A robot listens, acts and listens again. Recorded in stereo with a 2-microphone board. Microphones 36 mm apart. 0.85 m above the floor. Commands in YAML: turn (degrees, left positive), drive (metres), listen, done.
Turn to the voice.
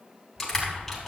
turn: -50
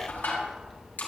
done: "Facing the child speaking, 2 to 4 m away."